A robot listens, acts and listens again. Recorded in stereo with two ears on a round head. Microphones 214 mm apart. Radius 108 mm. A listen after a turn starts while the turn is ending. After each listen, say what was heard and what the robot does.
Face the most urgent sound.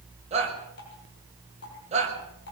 The shout: about 30° right or 150° right. Turn 30° right.
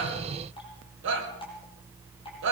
So it is at 125° right. Turn 125° right.
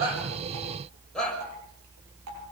Facing the shout.